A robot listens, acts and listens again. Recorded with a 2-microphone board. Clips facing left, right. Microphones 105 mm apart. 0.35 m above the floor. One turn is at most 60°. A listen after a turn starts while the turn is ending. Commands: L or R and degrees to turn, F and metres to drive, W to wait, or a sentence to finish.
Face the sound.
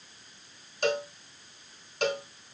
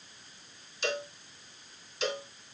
L60
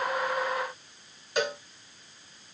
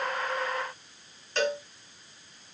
L10
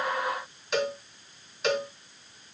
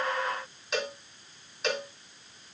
Found it: a cowbell, straight ahead.